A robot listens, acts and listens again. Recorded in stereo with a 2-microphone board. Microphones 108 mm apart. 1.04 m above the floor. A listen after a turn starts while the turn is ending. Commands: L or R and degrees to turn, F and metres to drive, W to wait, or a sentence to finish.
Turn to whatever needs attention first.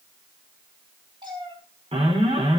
R65
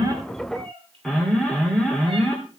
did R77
Found it: an alarm, straight ahead.